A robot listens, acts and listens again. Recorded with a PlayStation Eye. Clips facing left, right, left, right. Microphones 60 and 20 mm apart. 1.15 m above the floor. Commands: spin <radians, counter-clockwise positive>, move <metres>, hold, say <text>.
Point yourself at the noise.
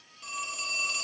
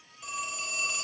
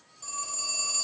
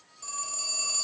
spin -0.52
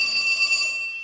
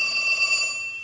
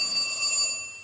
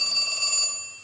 spin -2.53
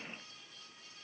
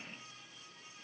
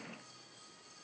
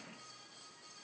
hold
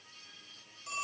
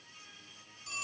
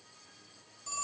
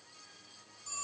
spin 0.44
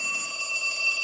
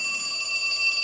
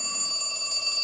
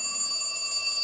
spin 0.35
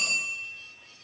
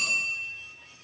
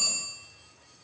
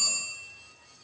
say Found it: a phone ringing, straight ahead, 1 to 2 m away.